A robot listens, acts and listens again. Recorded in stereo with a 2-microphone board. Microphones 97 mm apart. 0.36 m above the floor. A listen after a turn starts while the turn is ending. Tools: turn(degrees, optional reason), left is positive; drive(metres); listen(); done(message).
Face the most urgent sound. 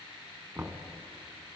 listen()
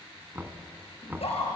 turn(degrees=90)
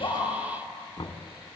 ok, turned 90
listen()
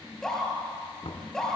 done("Found it: a scream, straight ahead.")